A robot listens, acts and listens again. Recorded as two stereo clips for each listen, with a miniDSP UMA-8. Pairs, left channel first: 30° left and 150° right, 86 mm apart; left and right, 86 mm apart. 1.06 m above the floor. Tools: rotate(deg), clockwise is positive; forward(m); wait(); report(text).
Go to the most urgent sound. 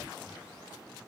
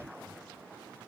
wait()
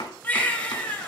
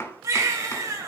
rotate(40)
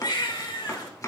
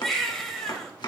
forward(1.0)
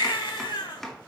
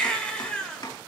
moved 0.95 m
rotate(-10)
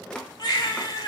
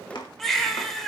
forward(1.0)
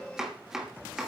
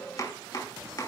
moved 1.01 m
wait()
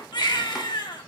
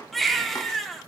forward(1.0)
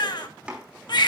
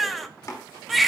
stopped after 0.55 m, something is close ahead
report("I am next to the baby crying.")